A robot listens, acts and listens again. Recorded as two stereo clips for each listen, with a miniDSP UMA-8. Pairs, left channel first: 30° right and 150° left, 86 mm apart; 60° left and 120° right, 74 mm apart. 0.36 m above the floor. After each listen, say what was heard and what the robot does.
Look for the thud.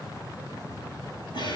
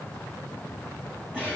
Keep listening.
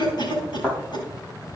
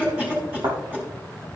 The thud: 115° right. Turn 115° right.
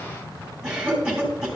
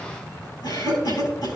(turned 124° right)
Nothing new. It was at 10° left. Turn 10° left.
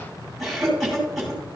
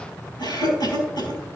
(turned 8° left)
I heard a thud from this way, but can't make it out now.